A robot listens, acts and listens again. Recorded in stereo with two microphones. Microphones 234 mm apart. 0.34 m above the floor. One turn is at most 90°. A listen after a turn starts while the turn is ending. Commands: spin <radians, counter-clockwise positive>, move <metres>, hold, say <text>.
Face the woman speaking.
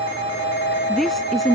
spin 0.52
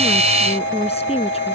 spin 1.57
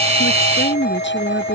spin 0.87
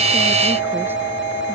hold
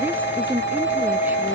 say Found it: a woman speaking, straight ahead.